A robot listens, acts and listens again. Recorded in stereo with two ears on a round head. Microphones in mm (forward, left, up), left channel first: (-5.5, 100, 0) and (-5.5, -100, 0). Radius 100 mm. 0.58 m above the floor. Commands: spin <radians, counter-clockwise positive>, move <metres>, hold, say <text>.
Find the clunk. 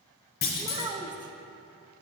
spin 0.79
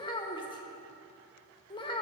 hold
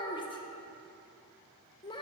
say I heard a clunk, but can't make it out now. It was about straight ahead or 90° left.